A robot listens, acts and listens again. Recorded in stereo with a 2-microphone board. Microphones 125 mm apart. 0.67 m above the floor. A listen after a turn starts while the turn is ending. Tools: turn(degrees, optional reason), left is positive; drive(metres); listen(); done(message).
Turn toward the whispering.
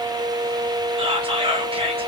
turn(degrees=-40, reason="The whispering: about 40° right or 140° right.")
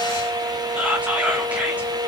turn(degrees=-10, reason="So it is at 10° right.")
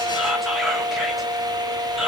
done("Facing the whispering, under 1 m away.")